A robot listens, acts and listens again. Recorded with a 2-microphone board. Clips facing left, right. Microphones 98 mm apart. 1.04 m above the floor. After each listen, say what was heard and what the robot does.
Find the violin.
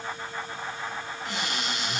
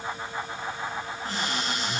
Keep listening.
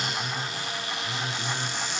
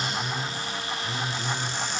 Keep listening.
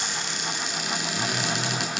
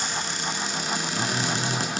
I can't make out a violin to turn to.